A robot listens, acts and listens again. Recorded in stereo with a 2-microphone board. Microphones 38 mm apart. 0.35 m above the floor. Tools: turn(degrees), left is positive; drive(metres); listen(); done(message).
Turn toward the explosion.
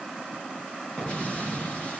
turn(degrees=30)
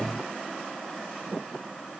listen()
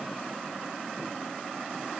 done("I heard an explosion, but can't make it out now. It was about straight ahead or 120° left.")